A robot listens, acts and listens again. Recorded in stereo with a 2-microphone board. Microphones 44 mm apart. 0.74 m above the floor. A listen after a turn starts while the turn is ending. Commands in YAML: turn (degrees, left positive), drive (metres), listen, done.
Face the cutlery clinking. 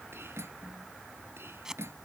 turn: -90
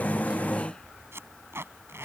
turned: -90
listen: true
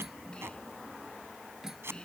turn: -10
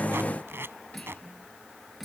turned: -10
done: "Facing the cutlery clinking."